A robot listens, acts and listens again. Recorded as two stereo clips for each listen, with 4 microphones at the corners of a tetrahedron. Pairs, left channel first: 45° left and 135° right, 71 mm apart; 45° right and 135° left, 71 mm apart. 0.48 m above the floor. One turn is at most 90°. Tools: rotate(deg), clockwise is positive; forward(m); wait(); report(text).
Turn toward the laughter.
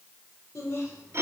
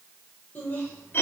rotate(-10)
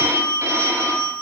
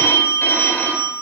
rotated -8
wait()
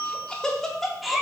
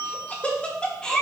rotate(65)
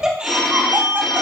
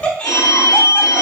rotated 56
rotate(85)
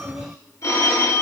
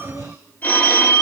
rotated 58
rotate(25)
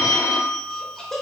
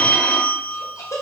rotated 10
rotate(40)
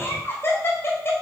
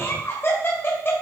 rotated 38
report("Found it: laughter, straight ahead.")